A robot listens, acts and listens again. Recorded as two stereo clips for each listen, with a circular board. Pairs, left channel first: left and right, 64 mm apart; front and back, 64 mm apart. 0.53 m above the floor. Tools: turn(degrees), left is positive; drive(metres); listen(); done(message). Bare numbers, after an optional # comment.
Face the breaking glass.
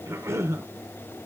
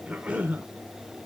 listen()
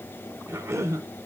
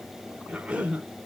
listen()
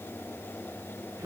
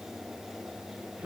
done("I can't make out breaking glass, only a cough.")